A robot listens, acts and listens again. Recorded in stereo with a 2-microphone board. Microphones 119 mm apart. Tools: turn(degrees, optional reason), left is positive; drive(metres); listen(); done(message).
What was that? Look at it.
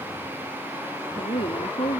turn(degrees=60, reason="The woman speaking: about 60° left or 120° left.")
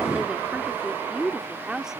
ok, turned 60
done("Facing the woman speaking.")